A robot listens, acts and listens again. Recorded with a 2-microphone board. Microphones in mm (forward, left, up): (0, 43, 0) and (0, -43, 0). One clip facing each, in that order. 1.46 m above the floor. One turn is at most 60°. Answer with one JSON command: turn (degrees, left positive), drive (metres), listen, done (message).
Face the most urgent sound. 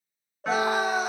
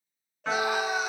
{"turn": 40}
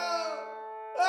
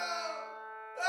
{"turn": 60}
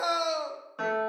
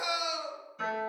{"turn": 45}
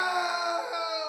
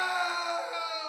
{"turn": 15}
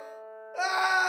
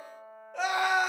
{"done": "Facing the scream."}